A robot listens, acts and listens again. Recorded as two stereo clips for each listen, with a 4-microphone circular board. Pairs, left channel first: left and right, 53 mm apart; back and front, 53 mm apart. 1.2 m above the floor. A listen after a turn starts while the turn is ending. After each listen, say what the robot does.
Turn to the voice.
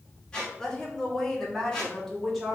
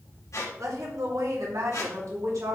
Facing the woman speaking, 2 to 4 m away.